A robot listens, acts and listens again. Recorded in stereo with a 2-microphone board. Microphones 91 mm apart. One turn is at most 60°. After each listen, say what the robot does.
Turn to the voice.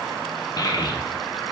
Turn 45° left.
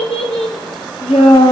Turn 60° left.
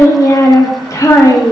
Turn 35° left.
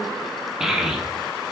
Facing the child speaking, 1 to 2 m away.